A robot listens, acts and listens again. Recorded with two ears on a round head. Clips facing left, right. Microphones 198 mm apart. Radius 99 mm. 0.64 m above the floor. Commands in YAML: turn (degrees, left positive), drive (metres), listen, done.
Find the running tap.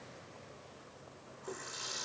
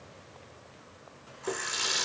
turn: -90
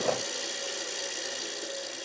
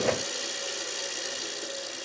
done: "Facing the running tap, 1 to 2 m away."